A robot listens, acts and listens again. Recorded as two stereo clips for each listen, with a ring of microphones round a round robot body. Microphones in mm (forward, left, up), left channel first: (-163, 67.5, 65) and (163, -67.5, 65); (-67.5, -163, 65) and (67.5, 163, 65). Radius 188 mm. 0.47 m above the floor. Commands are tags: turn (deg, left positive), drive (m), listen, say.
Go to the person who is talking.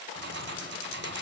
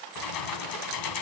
<listen/>
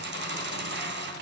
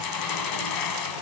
<listen/>
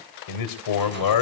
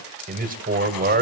<turn deg="135"/>
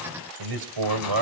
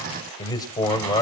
<turn deg="-35"/>
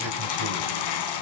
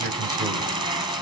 <drive m="1.0"/>
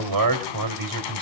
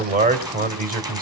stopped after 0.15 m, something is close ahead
<say>Blocked. The man speaking is further on, straight ahead.</say>